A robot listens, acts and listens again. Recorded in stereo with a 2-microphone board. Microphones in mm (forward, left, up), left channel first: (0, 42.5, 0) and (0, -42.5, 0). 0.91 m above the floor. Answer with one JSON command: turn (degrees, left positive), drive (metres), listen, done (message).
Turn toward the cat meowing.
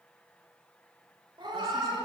{"turn": -70}
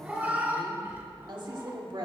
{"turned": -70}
{"turn": -30}
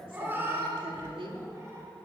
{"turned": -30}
{"turn": -35}
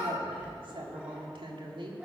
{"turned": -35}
{"listen": true}
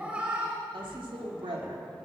{"turn": -15}
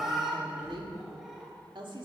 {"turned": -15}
{"done": "Found it: a cat meowing, straight ahead."}